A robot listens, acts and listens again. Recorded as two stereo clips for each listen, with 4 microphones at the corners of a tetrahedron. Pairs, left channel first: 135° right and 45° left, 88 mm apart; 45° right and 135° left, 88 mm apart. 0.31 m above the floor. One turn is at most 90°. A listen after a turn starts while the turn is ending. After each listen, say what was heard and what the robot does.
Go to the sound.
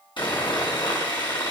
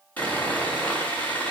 The sawing: 120° right. Turn 90° right.
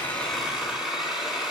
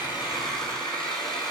The sawing is now 40° right. Turn 40° right.
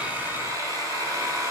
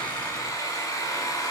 Drive 1.0 m forward.
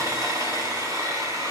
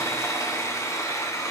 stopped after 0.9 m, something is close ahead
Something is in my way. I am facing the sawing but have not reached it.